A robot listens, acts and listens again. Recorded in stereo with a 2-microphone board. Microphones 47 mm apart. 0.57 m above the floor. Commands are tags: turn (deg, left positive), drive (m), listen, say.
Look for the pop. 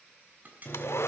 <turn deg="-40"/>
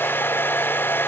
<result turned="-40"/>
<listen/>
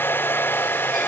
<say>I heard a pop, but can't make it out now. It was about straight ahead or 100° right.</say>